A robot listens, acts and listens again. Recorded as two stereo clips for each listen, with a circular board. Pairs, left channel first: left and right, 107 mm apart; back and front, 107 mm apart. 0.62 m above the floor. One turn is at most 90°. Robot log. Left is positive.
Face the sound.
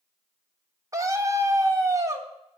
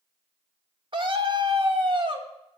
note: The scream: 35° right.
cmd yaw -35
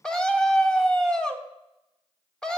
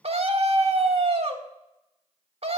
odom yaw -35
end: Facing the scream, 1 to 2 m away.